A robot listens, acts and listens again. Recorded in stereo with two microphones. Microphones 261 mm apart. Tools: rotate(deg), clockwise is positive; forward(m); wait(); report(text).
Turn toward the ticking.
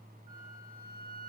wait()
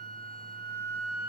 wait()
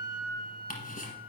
rotate(-30)
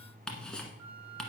report("Facing the ticking.")